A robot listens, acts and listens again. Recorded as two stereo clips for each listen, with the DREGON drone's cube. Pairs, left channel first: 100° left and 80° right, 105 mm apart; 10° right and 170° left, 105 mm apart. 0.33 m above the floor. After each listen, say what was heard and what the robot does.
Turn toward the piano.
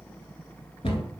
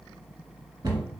Keep listening.
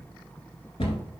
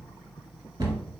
Keep listening.
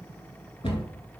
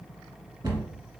I can't make out a piano, only a cupboard door.